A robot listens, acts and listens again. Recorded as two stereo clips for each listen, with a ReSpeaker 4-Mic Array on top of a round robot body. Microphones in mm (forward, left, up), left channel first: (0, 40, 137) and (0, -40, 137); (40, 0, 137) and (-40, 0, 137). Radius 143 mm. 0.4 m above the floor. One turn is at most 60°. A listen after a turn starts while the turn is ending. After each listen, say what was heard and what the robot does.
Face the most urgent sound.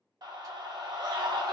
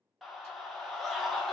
The scream: 90° right. Turn 60° right.
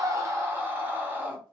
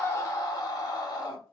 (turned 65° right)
The scream is now 25° right. Turn 25° right.
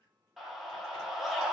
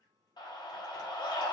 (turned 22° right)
Found it: a scream, straight ahead, 1 to 2 m away.